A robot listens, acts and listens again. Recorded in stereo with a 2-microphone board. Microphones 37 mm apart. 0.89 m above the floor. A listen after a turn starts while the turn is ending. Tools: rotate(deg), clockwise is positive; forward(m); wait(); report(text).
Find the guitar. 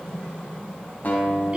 rotate(-45)
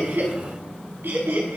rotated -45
wait()
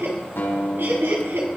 rotate(-85)
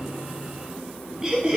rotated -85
wait()
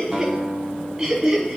report("Found it: a guitar, straight ahead, over 4 m away.")